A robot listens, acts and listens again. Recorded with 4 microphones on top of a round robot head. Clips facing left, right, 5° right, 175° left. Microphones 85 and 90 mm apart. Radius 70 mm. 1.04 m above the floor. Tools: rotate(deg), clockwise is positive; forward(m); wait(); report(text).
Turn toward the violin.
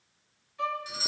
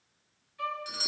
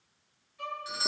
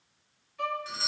rotate(-150)
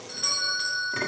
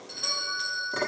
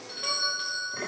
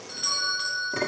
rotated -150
wait()
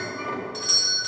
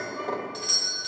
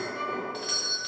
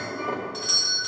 wait()
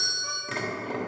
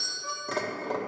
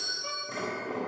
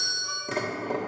report("I heard a violin from this way, but can't make it out now.")